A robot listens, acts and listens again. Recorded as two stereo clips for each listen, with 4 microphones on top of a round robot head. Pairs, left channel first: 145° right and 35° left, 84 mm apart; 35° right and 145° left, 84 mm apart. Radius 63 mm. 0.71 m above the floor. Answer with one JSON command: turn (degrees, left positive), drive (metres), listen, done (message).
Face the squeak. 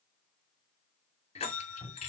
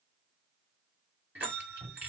{"listen": true}
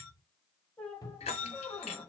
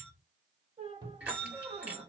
{"turn": 140}
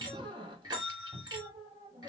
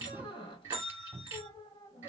{"done": "Facing the squeak."}